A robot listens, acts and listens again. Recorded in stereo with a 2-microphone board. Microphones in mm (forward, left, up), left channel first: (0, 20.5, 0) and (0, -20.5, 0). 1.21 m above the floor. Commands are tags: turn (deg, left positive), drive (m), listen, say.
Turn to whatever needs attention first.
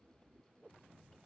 <listen/>
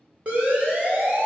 <turn deg="-30"/>
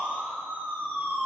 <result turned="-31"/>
<turn deg="-120"/>
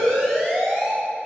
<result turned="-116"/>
<say>Found it: a siren, straight ahead, over 4 m away.</say>